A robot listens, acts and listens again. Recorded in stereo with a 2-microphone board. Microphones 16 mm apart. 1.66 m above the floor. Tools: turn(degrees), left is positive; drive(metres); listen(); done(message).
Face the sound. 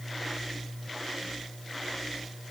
listen()
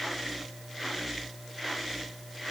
listen()
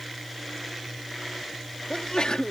turn(degrees=90)
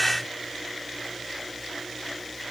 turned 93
done("I heard a sneeze from this way, but can't make it out now.")